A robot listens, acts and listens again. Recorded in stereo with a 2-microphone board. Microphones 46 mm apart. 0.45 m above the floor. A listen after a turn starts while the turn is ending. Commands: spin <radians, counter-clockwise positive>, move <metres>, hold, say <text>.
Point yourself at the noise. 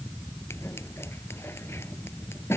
spin 1.05
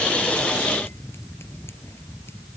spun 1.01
hold
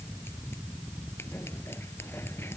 hold
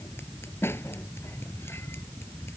spin 1.05
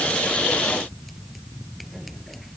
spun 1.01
hold
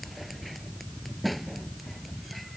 say Facing the scissors.